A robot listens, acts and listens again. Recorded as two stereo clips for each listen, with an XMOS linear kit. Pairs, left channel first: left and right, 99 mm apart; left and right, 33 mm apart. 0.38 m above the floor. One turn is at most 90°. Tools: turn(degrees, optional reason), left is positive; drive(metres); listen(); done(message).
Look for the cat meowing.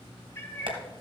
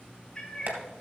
turn(degrees=25, reason="The cat meowing: about 25° left or 155° left.")
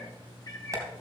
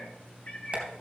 turn(degrees=35, reason="The cat meowing: about 35° left or 145° left.")
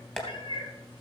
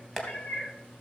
turn(degrees=90, reason="So it is at 130° left.")
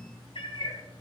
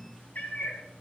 turn(degrees=60, reason="The cat meowing is now 60° left.")
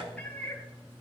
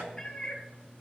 turn(degrees=15, reason="The cat meowing is now 15° left.")
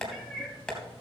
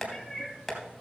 done("Found it: a cat meowing, straight ahead, 1 to 2 m away.")